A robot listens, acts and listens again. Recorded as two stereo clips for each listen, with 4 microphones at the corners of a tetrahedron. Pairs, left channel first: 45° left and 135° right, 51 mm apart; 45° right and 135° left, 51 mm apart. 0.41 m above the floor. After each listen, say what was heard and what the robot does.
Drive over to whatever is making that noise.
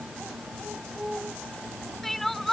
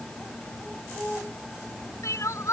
The crying: 40° right. Turn 40° right.
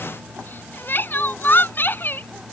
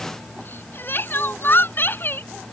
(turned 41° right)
Drive 1.0 m forward.
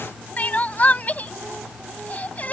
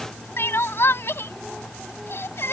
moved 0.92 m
The crying is now 10° right. Turn 10° right.
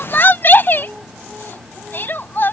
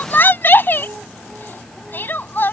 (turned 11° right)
Drive 1.0 m forward.
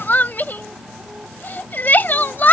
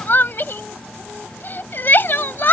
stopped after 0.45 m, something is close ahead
I am next to the crying.